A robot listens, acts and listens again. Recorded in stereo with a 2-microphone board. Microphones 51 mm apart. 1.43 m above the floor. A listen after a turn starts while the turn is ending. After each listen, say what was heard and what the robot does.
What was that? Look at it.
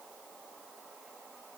Keep listening.
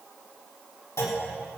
Turn 90° left.
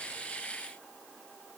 I heard a clunk from this way, but can't make it out now.